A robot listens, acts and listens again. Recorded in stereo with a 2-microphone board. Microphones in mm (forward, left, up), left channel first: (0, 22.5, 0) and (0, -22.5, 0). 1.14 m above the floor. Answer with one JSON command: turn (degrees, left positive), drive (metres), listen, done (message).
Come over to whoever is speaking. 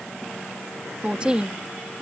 {"turn": -25}
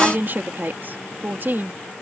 {"turn": -130}
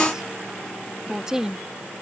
{"turn": -15}
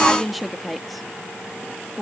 {"drive": 1.0}
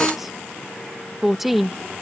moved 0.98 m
{"drive": 1.0}
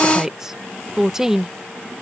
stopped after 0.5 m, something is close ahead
{"turn": -15}
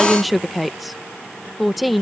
{"done": "Arrived at the woman speaking, straight ahead."}